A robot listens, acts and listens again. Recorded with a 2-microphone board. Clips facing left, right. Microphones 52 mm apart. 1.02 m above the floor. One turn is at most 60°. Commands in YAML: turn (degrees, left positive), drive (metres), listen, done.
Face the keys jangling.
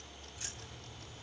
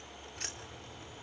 turn: -55
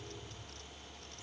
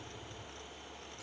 listen: true
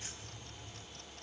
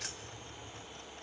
turn: -60
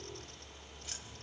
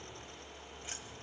turn: -20
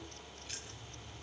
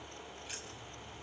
turn: -10
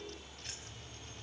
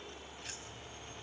done: "Facing the keys jangling."